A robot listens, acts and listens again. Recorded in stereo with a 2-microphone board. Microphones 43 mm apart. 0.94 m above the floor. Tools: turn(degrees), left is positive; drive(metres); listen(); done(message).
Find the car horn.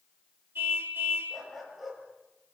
turn(degrees=-60)
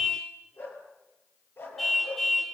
done("Found it: a car horn, straight ahead, 2 to 4 m away.")